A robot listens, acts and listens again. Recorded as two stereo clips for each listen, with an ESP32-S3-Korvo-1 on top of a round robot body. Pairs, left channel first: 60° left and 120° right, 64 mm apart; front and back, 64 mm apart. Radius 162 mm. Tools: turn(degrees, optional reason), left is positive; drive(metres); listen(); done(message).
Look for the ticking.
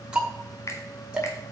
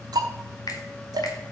turn(degrees=165, reason="The ticking: 165° left.")
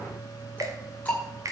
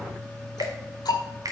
turn(degrees=-10, reason="The ticking is now 10° right.")
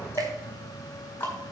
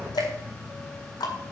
done("Facing the ticking.")